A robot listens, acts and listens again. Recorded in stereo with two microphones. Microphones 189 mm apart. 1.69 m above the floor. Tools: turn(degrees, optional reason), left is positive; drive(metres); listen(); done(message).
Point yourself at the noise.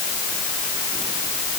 listen()
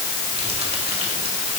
listen()
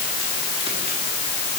done("I can't make out anything to turn to.")